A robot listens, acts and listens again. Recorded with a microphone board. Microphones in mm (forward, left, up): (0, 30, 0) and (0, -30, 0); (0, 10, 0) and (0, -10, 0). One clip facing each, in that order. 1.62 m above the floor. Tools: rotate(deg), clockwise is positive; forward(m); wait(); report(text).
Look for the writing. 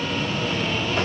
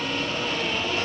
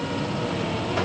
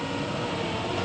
wait()
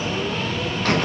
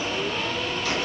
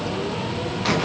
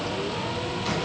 wait()
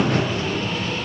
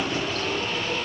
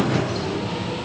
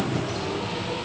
report("I can't make out writing to turn to.")